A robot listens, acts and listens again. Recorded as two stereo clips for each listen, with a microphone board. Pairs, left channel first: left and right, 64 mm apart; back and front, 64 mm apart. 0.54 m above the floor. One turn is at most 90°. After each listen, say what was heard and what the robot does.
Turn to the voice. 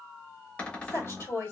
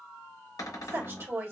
The woman speaking: 45° left. Turn 45° left.
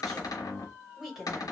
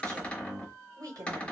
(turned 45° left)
Facing the woman speaking, 2 to 4 m away.